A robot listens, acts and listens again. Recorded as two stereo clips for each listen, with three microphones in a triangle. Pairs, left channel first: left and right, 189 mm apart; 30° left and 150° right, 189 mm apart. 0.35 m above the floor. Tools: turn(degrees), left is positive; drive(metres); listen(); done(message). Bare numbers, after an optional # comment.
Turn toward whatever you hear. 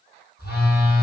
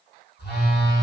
# The phone buzzing: 60° left.
turn(60)
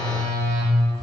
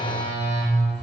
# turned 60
done("Found it: a phone buzzing, straight ahead.")